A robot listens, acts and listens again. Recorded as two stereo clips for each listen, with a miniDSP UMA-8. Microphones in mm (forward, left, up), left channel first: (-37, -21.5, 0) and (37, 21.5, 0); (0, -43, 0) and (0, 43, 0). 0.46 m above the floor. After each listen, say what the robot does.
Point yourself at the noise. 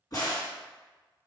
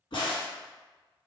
Turn 110° right.
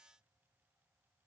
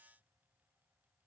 I heard a crack from this way, but can't make it out now.